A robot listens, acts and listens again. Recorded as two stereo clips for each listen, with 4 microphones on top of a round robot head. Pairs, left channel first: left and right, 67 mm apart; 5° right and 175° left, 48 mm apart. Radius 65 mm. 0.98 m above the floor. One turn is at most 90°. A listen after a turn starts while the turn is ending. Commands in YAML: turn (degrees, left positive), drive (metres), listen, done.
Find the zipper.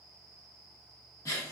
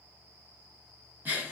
listen: true
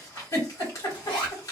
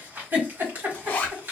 turn: 45
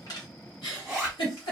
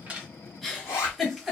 done: "Facing the zipper, under 1 m away."